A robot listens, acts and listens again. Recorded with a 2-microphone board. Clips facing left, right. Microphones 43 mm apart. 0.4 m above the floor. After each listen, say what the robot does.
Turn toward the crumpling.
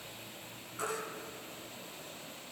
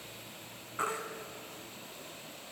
Keep listening.
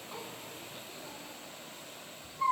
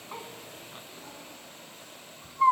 Keep listening.
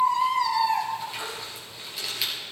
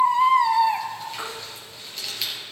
Turn 30° left.
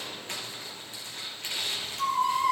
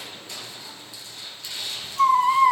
Turn 140° left.
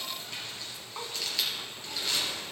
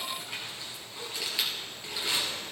Turn 15° right.
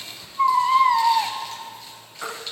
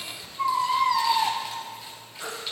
Keep listening.
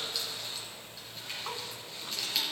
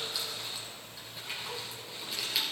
Facing the crumpling, 2 to 4 m away.